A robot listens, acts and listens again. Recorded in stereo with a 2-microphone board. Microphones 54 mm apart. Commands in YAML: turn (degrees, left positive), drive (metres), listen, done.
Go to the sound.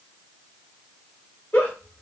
turn: 35
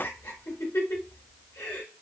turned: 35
turn: 105
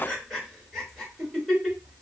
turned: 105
drive: 1.0
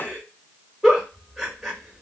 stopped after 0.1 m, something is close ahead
done: "Something is in my way. I am facing the giggle but have not reached it."